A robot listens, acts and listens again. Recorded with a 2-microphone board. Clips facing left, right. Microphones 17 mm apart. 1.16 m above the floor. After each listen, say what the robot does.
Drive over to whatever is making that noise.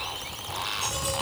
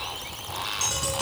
Turn 60° right.
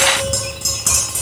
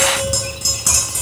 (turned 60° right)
Drive 1.0 m forward.
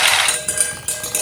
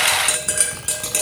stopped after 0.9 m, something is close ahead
Blocked. The tapping is further on, straight ahead.